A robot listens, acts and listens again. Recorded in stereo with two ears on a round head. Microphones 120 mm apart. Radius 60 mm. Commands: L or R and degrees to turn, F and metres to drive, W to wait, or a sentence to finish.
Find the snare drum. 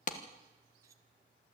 W
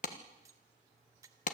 W
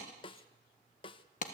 L40
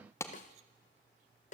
L90
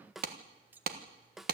Facing the snare drum.